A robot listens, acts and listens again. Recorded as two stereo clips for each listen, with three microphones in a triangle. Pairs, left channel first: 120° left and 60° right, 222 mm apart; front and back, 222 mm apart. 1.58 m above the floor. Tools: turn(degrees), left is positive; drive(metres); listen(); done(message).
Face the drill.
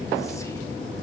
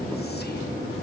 listen()
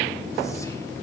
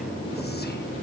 listen()
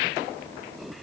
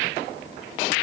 done("I can't make out a drill.")